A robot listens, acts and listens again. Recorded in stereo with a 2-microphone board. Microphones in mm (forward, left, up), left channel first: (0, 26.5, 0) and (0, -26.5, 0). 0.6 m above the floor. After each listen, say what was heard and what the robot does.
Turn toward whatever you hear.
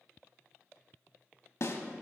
The snare drum: about 65° left or 115° left. Turn 65° left.
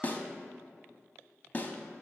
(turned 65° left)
So it is at 35° left. Turn 35° left.
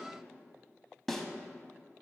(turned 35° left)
Facing the snare drum, under 1 m away.